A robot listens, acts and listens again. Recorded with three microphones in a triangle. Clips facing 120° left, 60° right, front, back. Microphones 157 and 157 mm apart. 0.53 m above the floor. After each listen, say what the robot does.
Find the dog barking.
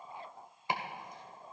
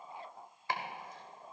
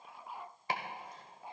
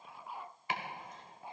Keep listening.
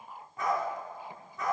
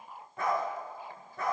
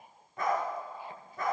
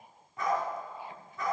Turn 35° right.
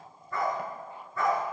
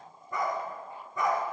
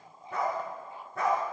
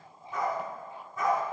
Turn 10° left.
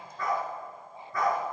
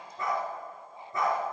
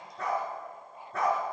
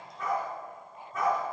Facing the dog barking.